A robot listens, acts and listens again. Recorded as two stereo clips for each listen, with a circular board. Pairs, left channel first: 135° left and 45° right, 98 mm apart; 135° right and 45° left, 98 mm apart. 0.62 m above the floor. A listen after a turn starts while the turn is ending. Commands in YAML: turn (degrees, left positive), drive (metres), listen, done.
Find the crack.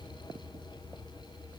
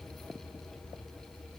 listen: true
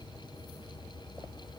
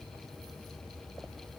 listen: true
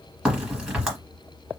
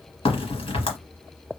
turn: -130
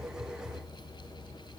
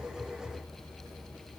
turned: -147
turn: 20
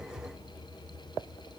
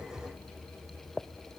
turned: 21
done: "I heard a crack from this way, but can't make it out now."